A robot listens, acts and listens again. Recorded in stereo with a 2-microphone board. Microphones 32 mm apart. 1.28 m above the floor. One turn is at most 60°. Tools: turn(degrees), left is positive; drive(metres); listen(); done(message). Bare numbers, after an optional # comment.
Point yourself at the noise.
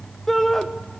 turn(30)
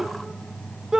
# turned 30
# So it is at 20° right.
turn(-20)
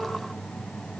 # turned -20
listen()
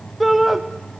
done("Facing the shout, 1 to 2 m away.")